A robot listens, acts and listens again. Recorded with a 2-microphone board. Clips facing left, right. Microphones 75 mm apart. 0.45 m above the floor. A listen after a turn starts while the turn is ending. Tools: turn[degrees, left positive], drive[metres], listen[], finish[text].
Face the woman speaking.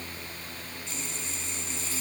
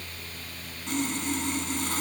Action: listen[]
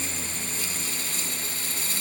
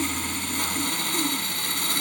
Action: listen[]
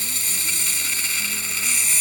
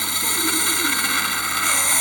Action: finish[I can't make out a woman speaking to turn to.]